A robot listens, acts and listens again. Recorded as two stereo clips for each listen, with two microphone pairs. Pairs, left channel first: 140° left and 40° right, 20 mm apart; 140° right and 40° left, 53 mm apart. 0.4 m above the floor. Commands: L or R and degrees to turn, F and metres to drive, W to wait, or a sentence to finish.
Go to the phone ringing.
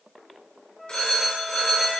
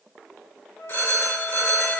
R175
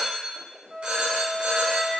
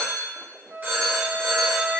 R15
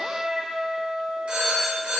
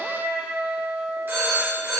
F1.0
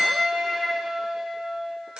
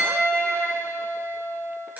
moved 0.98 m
R15
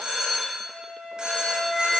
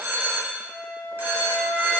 F1.0
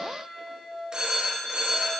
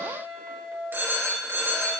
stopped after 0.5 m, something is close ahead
Arrived at the phone ringing, straight ahead.